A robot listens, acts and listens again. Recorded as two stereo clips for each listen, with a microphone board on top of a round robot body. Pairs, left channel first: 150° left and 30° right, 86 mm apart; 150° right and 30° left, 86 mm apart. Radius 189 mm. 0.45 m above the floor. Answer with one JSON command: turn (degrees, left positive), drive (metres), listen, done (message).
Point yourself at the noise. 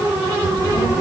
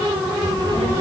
{"turn": 45}
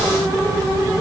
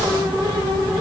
{"turn": 20}
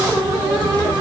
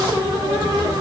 {"done": "Facing the child speaking."}